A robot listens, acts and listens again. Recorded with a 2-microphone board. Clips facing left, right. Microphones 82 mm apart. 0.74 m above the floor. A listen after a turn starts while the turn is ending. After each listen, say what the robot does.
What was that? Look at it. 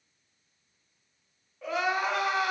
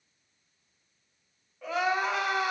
Turn 30° left.
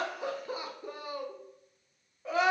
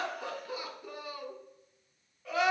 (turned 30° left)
Turn 150° left.
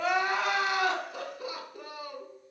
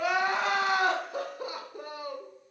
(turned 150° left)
Turn 35° right.
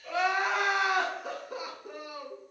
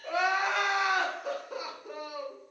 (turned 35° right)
Found it: crying, straight ahead, 1 to 2 m away.